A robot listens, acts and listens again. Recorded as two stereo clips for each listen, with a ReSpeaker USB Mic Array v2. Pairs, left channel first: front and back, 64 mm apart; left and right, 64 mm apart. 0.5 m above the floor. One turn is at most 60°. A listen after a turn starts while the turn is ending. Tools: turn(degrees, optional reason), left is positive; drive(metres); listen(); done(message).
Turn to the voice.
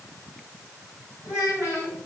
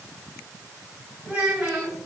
turn(degrees=-20, reason="The child speaking: 20° right.")
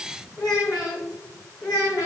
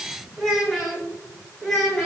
turn(degrees=10, reason="The child speaking is now 10° left.")
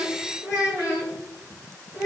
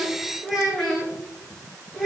turn(degrees=10, reason="The child speaking is now 10° left.")
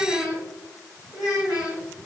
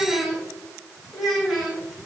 done("Facing the child speaking, 2 to 4 m away.")